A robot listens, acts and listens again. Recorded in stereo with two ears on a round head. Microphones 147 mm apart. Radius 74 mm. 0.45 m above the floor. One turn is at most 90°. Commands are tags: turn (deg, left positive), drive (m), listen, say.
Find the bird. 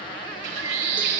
<turn deg="-70"/>
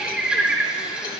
<say>Facing the bird.</say>